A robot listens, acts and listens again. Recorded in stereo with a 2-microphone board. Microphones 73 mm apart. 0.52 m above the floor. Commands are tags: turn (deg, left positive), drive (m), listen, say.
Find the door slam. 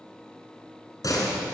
<turn deg="60"/>
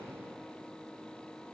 <listen/>
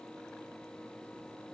<say>I heard a door slam, but can't make it out now. It was about straight ahead or 60° left.</say>